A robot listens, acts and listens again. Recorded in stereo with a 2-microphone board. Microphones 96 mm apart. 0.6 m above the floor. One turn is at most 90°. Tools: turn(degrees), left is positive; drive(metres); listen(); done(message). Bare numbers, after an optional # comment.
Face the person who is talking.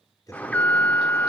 # The man speaking: about 40° left or 140° left.
turn(40)
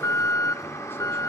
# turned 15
listen()
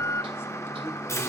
listen()
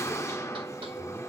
done("I heard a man speaking, but can't make it out now. It was about 25° left or 125° left.")